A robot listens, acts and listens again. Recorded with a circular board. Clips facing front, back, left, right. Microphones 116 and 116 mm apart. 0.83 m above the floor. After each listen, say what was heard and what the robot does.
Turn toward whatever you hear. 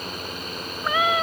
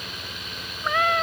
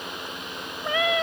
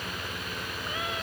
The cat meowing: 85° left. Turn 85° left.
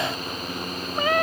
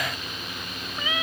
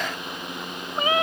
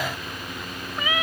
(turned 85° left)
The cat meowing is now 35° left. Turn 35° left.
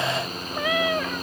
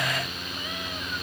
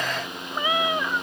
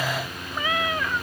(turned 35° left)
The cat meowing is now 15° left. Turn 15° left.
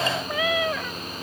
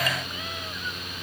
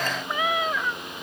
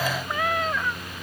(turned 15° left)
Facing the cat meowing.